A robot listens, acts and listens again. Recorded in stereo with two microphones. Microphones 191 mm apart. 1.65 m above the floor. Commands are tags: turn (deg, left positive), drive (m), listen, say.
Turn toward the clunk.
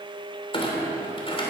<turn deg="30"/>
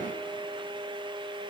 <listen/>
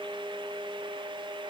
<say>I heard a clunk, but can't make it out now. It was about straight ahead or 120° left.</say>